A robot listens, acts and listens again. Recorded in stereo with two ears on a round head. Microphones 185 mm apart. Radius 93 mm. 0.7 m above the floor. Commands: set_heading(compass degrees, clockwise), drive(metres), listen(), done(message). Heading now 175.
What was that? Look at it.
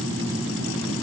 listen()
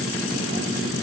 listen()
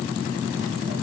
done("I can't make out anything to turn to.")